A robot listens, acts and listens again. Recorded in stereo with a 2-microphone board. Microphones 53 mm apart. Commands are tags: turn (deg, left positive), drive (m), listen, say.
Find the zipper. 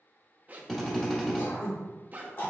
<turn deg="-30"/>
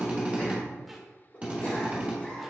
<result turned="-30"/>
<listen/>
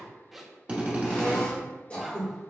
<say>Facing the zipper.</say>